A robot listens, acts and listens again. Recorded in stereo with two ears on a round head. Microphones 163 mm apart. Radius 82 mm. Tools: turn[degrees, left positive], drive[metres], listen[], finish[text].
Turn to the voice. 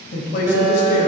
Thought: The woman speaking: about 55° left or 125° left.
Action: turn[55]
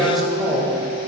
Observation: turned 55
Action: finish[Found it: a woman speaking, straight ahead.]